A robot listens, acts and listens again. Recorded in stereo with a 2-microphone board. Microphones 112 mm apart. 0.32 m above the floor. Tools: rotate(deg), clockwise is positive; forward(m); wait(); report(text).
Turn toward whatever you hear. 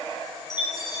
rotate(-40)
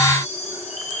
rotate(-100)
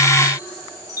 rotate(-30)
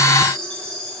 report("Facing the chime.")